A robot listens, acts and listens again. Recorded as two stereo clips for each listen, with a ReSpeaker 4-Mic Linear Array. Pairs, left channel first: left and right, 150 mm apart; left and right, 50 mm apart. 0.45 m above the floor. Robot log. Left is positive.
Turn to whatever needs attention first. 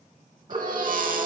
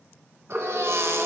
note: The baby crying: about 65° right or 115° right.
cmd yaw -65
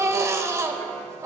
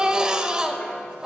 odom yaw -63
note: So it is at 20° right.
cmd yaw -20
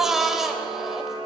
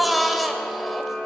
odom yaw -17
end: Found it: a baby crying, straight ahead.